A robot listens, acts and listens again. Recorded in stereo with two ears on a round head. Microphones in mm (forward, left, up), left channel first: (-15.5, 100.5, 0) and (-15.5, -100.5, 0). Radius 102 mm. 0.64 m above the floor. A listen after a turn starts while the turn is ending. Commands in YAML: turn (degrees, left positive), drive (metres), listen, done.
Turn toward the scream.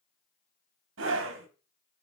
turn: -60
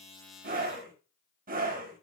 turn: -45
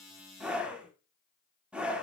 done: "Facing the scream, 1 to 2 m away."